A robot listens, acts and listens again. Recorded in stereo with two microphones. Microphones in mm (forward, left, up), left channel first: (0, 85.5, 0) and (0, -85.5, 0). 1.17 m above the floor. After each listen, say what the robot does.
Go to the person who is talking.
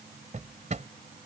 Keep listening.
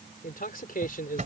Turn 55° left.
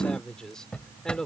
Drive 1.0 m forward.
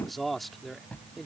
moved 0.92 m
Drive 1.0 m forward.
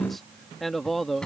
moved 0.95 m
Drive 1.0 m forward.
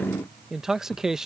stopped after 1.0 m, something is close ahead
I am next to the man speaking.